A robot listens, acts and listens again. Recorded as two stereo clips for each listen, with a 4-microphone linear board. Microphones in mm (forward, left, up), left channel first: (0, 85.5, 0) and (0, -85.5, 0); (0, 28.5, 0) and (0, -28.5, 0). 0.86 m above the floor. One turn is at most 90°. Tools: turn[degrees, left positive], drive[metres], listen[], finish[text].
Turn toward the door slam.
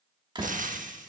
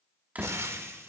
Thought: The door slam: about 30° right or 150° right.
Action: turn[-30]
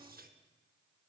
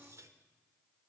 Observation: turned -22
Action: listen[]
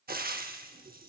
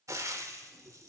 Action: finish[I heard a door slam, but can't make it out now. It was about 5° right or 130° right.]